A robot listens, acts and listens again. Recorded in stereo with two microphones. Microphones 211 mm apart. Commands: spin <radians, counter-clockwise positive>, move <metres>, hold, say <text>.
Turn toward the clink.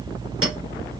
spin -1.57
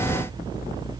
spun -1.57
hold
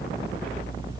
hold
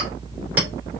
spin -0.17
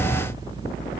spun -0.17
hold
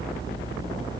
hold
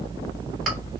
say Found it: a clink, straight ahead, 2 to 4 m away.